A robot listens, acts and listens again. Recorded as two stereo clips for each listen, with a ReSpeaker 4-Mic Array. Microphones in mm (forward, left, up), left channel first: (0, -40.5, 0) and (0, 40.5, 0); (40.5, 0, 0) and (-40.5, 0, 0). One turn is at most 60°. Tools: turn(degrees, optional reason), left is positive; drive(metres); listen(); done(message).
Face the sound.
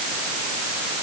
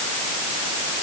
listen()
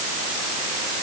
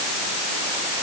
listen()
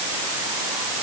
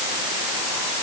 done("I can't make out anything.")